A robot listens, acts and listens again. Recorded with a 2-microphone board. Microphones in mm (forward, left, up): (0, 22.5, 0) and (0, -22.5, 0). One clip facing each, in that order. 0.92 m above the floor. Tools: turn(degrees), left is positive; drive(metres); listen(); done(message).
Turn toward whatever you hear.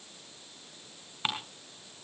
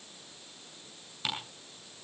turn(degrees=35)
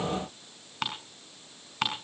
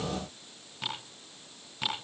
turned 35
turn(degrees=105)
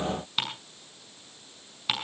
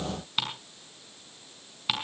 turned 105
done("Facing the ticking.")